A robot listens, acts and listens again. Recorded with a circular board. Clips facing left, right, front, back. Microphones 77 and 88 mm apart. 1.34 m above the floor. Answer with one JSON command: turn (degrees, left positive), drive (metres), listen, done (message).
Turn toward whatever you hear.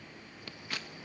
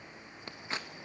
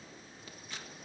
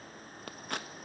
{"turn": -150}
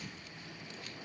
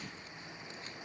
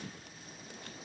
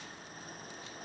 {"turn": -30}
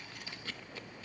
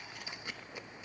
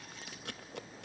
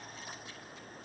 {"turn": -15}
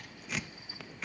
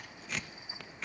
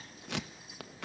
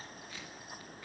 {"done": "Facing the scissors."}